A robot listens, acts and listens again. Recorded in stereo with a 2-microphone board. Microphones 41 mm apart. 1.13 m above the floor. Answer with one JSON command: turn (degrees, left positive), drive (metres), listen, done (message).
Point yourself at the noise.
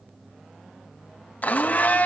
{"turn": 40}
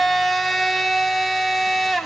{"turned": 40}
{"done": "Facing the blender."}